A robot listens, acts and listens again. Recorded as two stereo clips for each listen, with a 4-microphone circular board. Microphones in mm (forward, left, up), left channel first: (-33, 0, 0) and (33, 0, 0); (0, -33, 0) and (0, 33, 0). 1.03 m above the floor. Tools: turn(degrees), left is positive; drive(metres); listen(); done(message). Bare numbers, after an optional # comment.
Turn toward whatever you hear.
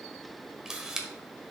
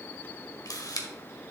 # The camera shutter: 85° right.
turn(-85)
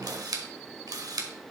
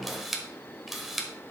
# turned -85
done("Facing the camera shutter, 1 to 2 m away.")